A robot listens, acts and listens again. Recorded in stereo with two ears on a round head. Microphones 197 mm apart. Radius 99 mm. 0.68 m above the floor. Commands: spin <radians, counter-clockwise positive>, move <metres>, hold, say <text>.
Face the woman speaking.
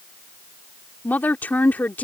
spin 0.52
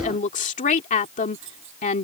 spin 2.44
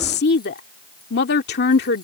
spin 0.96
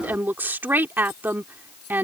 spin -0.17
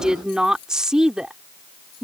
say Found it: a woman speaking, straight ahead.